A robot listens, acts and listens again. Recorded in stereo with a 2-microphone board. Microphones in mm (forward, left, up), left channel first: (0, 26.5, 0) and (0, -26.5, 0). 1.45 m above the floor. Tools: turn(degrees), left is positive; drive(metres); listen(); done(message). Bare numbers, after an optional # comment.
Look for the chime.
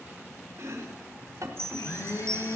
# The chime: about 15° left or 165° left.
turn(15)
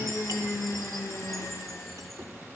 listen()
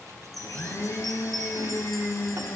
done("Facing the chime, 2 to 4 m away.")